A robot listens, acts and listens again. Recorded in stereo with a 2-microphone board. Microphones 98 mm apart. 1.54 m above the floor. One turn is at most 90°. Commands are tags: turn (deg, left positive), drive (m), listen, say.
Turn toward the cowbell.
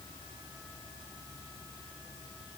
<listen/>
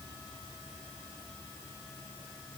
<listen/>
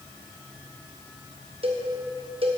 <turn deg="-70"/>
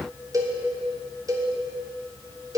<turn deg="-35"/>
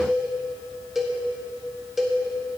<say>Found it: a cowbell, straight ahead.</say>